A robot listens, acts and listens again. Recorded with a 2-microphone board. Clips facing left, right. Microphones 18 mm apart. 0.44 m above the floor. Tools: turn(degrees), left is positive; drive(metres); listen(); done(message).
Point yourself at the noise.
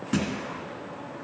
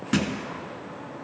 turn(degrees=-20)
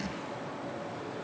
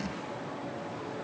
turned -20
listen()
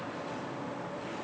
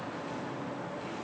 done("I heard a thud, but can't make it out now. It was about straight ahead or 140° right.")